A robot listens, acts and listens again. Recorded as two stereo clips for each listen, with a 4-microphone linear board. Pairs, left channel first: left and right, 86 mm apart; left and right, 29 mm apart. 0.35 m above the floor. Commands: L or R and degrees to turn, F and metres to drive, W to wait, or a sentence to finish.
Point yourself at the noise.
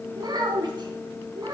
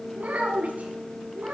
R50
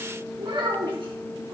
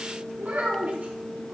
R75
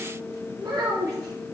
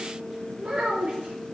R45
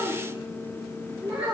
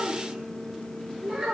R20
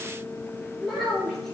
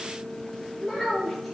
Facing the child speaking, over 4 m away.